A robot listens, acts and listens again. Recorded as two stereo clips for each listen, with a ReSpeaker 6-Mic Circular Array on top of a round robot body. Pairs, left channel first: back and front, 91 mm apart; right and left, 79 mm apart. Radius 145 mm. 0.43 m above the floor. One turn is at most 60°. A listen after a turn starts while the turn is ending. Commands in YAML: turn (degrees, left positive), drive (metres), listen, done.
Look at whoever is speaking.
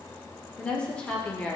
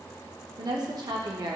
turn: 60
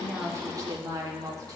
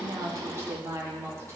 turn: 40
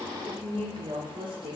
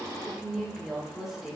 done: "Facing the woman speaking, 1 to 2 m away."